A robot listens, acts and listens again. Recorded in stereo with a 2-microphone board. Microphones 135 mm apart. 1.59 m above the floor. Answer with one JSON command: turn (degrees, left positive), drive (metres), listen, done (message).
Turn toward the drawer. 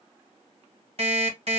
{"listen": true}
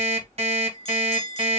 {"listen": true}
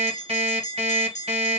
{"done": "I can't make out a drawer to turn to."}